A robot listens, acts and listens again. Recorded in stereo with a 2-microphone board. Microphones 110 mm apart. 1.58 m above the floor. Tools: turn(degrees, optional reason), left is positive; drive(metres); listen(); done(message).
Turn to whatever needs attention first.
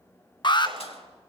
turn(degrees=45, reason="The alarm: about 45° left or 135° left.")
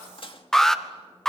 done("Found it: an alarm, straight ahead, 1 to 2 m away.")